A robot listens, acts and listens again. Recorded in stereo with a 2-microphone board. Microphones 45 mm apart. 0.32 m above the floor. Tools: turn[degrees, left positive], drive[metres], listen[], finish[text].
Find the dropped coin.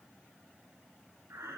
Action: listen[]
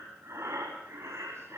Action: listen[]
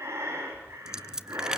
Action: turn[-30]
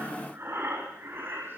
Action: listen[]
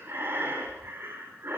Action: finish[I heard a dropped coin, but can't make it out now. It was about 15° left or 135° right.]